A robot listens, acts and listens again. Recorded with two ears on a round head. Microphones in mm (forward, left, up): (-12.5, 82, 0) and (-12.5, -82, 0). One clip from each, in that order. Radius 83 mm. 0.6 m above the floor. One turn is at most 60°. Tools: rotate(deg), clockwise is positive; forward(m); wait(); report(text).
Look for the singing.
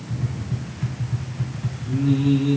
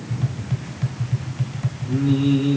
rotate(30)
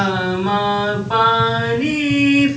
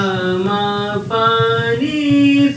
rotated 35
rotate(-25)
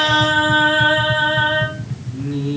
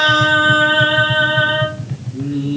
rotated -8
rotate(-15)
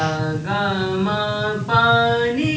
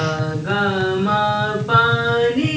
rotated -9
report("Found it: singing, straight ahead.")